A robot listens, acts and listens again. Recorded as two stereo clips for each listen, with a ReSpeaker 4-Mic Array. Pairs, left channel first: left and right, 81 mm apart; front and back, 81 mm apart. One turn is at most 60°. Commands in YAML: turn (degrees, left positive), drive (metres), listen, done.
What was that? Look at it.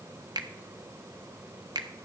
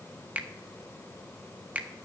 turn: -60
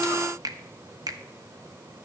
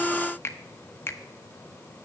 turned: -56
turn: -55
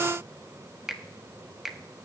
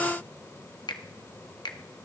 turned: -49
done: "Facing the finger snap, 1 to 2 m away."